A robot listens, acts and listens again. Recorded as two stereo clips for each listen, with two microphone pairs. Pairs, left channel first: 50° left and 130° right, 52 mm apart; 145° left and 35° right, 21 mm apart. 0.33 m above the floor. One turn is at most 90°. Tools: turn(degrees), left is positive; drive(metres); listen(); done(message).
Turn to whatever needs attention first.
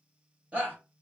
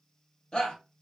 turn(degrees=90)
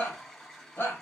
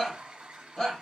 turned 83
turn(degrees=90)
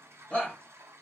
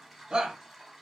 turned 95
done("Found it: a shout, straight ahead.")